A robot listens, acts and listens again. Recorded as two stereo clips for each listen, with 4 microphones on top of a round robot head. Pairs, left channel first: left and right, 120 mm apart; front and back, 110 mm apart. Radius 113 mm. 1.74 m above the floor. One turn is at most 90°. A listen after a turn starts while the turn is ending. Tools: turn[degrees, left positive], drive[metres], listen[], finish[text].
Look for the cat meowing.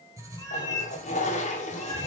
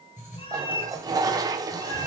Thought: The cat meowing: 30° left.
Action: turn[30]
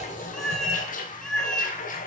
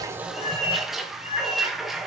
Action: finish[Facing the cat meowing, 2 to 4 m away.]